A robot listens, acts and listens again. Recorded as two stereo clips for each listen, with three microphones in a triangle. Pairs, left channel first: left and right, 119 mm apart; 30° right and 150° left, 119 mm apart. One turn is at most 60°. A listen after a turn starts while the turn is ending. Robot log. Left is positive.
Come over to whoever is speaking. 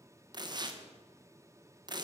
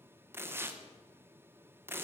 cmd idle
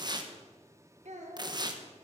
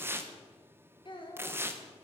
note: The child speaking: 75° right.
cmd yaw -60
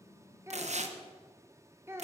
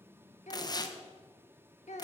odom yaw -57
note: The child speaking is now 20° right.
cmd yaw -20
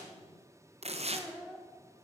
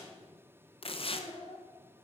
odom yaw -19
cmd fwd 1.0
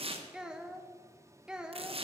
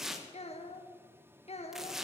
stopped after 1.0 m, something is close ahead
end: Arrived at the child speaking, straight ahead.